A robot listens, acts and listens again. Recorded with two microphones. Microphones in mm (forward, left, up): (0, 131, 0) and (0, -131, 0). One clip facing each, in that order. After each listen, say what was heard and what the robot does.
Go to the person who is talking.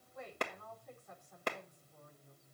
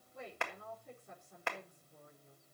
The woman speaking: about 30° right or 150° right. Turn 30° right.
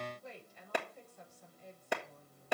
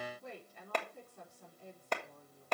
So it is at 120° right. Turn 120° right.
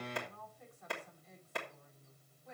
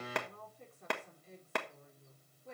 The woman speaking is now 35° right. Turn 35° right.
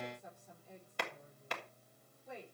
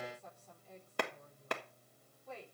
The woman speaking is now 15° left. Turn 15° left.
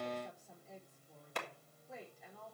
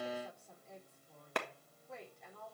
Drive 1.0 m forward.
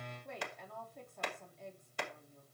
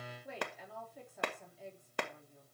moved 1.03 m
Drive 1.0 m forward.
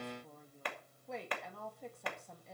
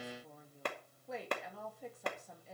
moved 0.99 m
Drive 1.0 m forward.
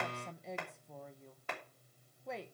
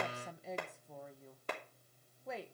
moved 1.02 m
Drive 1.0 m forward.
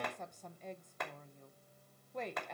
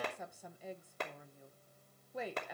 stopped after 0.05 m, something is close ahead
The woman speaking is now 10° right. Turn 10° right.
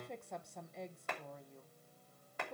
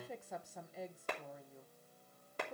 Arrived at the woman speaking, straight ahead.